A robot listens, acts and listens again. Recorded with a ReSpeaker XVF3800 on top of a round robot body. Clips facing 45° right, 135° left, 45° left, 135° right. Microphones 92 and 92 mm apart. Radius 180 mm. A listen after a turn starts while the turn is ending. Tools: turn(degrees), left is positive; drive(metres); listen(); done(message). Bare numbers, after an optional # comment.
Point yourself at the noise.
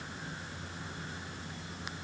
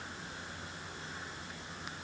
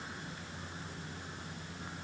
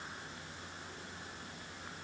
listen()
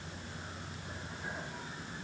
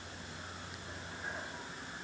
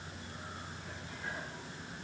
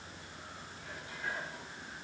listen()
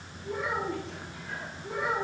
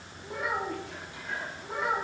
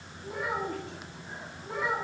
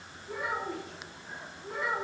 # The child speaking: 105° left.
turn(105)
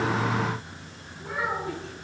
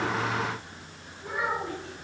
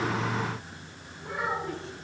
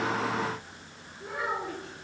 # The child speaking is now 25° left.
turn(25)
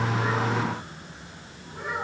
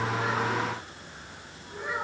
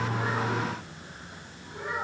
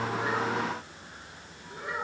done("Found it: a child speaking, straight ahead.")